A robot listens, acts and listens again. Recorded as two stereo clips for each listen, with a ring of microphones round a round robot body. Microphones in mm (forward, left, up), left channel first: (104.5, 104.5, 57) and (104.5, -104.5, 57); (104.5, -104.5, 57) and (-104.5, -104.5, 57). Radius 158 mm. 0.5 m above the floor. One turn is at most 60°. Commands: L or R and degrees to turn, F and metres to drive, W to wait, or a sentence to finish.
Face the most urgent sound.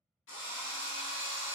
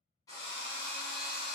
W
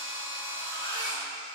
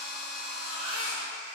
L60
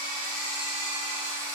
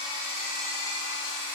L60
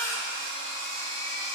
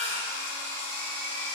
L10
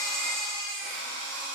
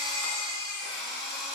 Found it: a baby crying, straight ahead.